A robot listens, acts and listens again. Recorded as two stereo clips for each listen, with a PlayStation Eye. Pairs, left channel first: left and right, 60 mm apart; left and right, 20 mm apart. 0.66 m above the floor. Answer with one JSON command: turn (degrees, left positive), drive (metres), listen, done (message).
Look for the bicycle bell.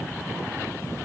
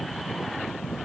{"listen": true}
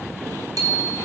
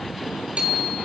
{"turn": -90}
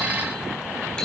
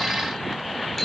{"listen": true}
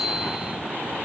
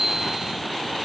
{"turn": 10}
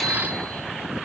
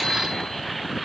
{"listen": true}
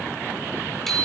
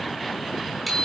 {"done": "Facing the bicycle bell."}